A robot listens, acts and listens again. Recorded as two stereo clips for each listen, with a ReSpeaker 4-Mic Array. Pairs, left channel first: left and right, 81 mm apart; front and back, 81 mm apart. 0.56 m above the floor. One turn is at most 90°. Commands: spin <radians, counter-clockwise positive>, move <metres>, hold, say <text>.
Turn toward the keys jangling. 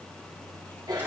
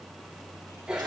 hold
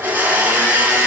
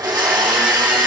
hold
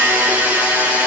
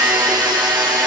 say I can't make out keys jangling to turn to.